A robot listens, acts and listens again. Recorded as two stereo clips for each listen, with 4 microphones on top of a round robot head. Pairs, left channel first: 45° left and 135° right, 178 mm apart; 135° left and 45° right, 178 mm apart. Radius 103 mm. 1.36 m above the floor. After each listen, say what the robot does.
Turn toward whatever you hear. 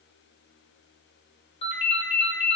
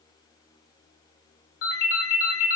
Turn 105° left.
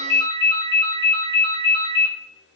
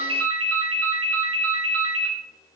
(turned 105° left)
Turn 30° right.
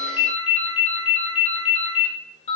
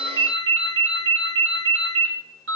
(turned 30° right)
Turn 15° right.
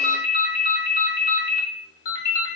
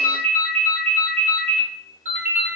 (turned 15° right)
Found it: a ringtone, straight ahead, under 1 m away.